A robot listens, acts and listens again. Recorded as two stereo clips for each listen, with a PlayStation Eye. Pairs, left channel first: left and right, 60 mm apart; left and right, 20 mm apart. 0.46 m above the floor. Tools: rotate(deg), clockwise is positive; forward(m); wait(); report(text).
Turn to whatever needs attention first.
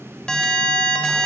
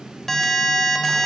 rotate(-15)
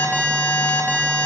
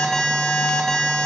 rotate(-150)
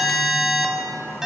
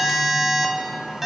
rotate(10)
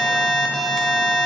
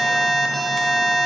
report("Facing the alarm.")